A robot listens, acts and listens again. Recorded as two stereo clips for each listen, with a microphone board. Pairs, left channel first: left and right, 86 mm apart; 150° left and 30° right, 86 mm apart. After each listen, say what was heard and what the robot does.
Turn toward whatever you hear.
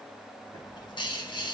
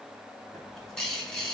The bird: 65° left. Turn 65° left.
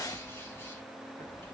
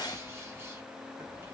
The bird is now 30° left. Turn 30° left.
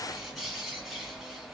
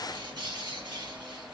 Found it: a bird, straight ahead, 1 to 2 m away.